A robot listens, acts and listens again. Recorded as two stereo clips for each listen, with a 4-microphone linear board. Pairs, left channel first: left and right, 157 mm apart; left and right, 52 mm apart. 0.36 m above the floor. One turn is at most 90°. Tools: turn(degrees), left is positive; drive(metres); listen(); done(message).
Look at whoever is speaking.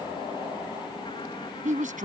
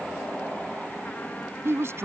turn(degrees=-55)
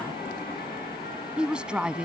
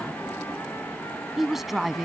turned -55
done("Facing the woman speaking.")